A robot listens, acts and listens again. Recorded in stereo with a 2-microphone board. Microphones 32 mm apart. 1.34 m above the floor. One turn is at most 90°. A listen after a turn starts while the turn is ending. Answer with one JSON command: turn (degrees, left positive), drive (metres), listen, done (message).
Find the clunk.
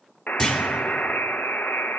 {"turn": 25}
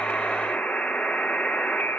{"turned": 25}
{"listen": true}
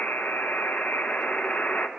{"done": "I heard a clunk, but can't make it out now. It was about straight ahead or 130° left."}